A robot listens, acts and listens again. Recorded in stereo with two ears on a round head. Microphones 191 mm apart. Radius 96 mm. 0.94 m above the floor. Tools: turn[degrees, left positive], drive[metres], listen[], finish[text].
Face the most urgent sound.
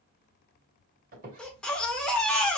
Action: turn[30]
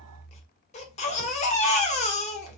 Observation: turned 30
Thought: So it is at 150° left.
Action: turn[150]
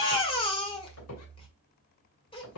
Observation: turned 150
Thought: The baby crying is now 25° left.
Action: turn[25]
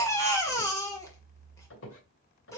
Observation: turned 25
Thought: The baby crying is now 15° left.
Action: turn[15]
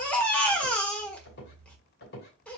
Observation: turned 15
Action: finish[Found it: a baby crying, straight ahead.]